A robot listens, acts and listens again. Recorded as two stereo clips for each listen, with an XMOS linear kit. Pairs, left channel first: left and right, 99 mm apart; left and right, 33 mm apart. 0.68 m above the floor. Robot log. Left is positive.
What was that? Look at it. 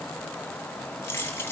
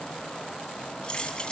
note: The keys jangling: about 20° left or 160° left.
cmd yaw +20
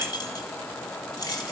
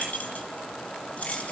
note: The keys jangling: about 35° left or 145° left.
cmd yaw +35
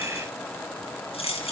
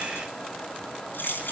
note: So it is at 120° left.
cmd yaw +120
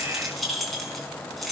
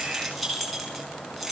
end: Facing the keys jangling.